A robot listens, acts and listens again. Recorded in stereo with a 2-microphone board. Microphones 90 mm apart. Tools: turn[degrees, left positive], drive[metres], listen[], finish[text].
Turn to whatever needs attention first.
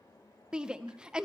Action: turn[-30]
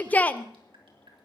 Thought: So it is at 20° left.
Action: turn[20]
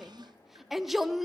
Action: finish[Found it: a shout, straight ahead, under 1 m away.]